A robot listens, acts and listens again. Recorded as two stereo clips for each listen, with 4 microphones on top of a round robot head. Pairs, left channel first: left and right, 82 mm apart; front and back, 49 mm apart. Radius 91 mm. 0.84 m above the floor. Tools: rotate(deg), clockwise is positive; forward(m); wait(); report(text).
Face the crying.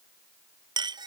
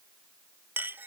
wait()
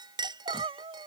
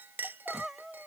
rotate(95)
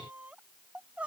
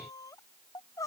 rotate(10)
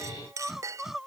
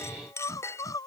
report("Facing the crying.")